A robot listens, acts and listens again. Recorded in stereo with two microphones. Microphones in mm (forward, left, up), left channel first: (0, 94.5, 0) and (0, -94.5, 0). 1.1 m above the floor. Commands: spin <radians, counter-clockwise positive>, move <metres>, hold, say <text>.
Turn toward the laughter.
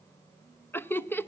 spin 0.52
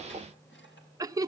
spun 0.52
spin -0.35
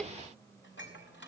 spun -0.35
hold
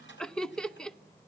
say Facing the laughter.